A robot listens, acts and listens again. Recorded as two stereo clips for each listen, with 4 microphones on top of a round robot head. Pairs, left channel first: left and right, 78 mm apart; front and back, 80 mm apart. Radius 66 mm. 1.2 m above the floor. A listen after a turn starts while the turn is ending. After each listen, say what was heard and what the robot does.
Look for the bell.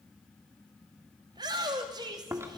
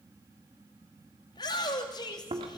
Keep listening.
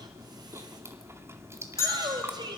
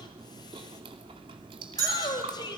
The bell: 140° left. Turn 140° left.
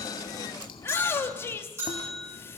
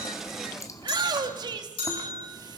The bell is now 25° right. Turn 25° right.
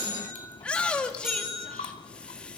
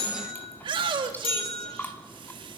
Facing the bell, over 4 m away.